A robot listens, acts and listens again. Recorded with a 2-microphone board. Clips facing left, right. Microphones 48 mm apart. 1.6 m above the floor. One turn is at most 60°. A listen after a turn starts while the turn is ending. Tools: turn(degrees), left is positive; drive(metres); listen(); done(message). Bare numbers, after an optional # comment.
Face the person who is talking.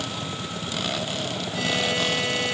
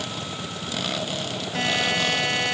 listen()
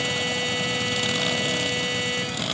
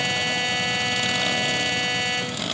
listen()
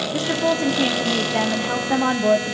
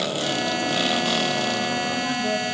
# The woman speaking: about 65° left or 115° left.
turn(60)
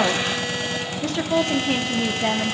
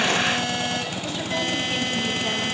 # So it is at 60° left.
turn(60)
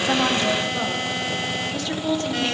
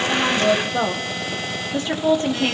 # The woman speaking is now 25° right.
turn(-25)
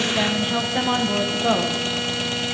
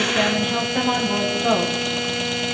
done("Facing the woman speaking, 1 to 2 m away.")